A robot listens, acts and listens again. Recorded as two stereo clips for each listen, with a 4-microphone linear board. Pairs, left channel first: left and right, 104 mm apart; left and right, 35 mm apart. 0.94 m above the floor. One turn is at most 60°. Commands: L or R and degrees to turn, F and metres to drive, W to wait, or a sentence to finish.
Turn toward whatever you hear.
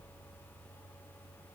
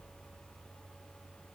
W
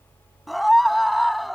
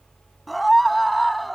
L30
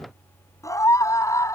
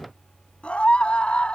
L60
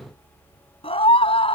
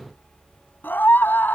L60
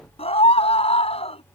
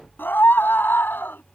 L60
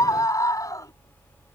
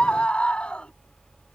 L35
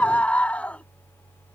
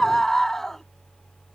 L10
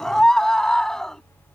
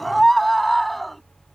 Facing the scream.